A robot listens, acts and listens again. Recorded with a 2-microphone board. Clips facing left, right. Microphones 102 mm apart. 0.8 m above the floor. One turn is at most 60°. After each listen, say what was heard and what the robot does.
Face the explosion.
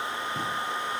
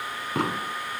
Turn 60° right.
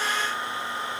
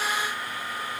Nothing new. It was at 30° right. Turn 30° right.
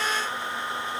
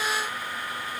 Facing where the explosion came from. I can't hear it now.